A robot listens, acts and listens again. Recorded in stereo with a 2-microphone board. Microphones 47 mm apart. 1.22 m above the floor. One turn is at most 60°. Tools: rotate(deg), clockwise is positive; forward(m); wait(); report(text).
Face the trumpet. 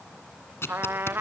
rotate(55)
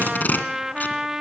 rotate(15)
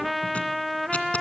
report("Found it: a trumpet, straight ahead.")